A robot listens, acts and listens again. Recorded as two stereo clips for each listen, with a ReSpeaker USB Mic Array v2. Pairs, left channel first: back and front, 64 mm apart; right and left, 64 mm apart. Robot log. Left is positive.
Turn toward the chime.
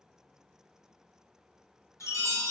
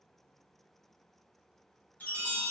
note: The chime: 155° right.
cmd yaw -155
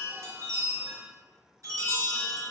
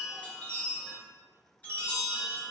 note: The chime is now 25° right.
cmd yaw -25
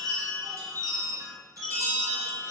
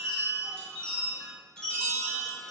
note: The chime is now 10° right.
cmd yaw -10
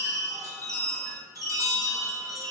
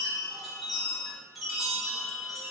end: Facing the chime, 1 to 2 m away.